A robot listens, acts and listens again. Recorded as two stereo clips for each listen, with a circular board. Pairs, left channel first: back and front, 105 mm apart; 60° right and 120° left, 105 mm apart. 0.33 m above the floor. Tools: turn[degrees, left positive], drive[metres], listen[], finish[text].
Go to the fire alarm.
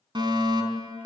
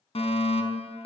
Thought: The fire alarm: 45° right.
Action: turn[-45]
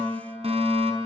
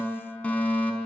Thought: The fire alarm is now 15° left.
Action: turn[15]
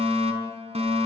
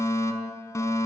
Action: drive[1.0]
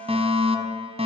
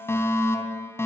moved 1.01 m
Action: drive[1.0]
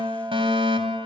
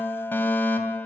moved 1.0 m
Action: drive[1.0]
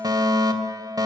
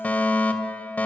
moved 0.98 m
Action: drive[1.0]
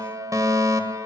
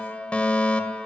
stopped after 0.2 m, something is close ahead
Thought: The fire alarm is now 10° left.
Action: turn[10]
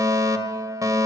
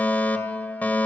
Action: finish[I am next to the fire alarm.]